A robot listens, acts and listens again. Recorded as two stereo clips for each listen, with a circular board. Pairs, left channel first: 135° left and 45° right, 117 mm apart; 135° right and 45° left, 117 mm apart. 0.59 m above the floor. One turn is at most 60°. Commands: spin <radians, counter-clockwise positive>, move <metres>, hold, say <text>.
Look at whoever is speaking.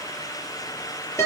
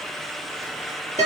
hold
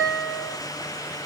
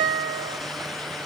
hold
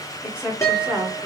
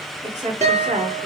spin 0.61
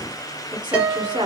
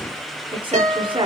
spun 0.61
say Found it: a woman speaking, straight ahead, over 4 m away.